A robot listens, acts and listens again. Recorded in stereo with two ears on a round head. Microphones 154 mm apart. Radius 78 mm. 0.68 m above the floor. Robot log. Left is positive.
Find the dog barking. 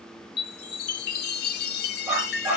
cmd yaw -30
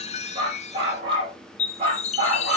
note: So it is at 155° right.
cmd yaw -155
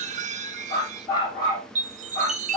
note: The dog barking is now 20° left.
cmd yaw +20
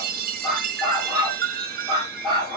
note: The dog barking is now 10° left.
cmd yaw +10
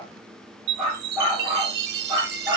end: Found it: a dog barking, straight ahead, over 4 m away.